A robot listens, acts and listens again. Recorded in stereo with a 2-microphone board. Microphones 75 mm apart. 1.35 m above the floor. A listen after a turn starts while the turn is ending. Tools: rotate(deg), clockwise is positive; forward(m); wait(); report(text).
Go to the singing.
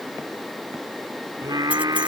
rotate(60)
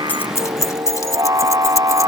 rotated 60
rotate(55)
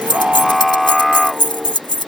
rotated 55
forward(1.0)
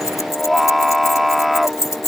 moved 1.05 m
forward(1.0)
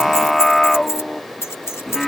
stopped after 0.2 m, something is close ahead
report("Something is in my way. I am facing the singing but have not reached it.")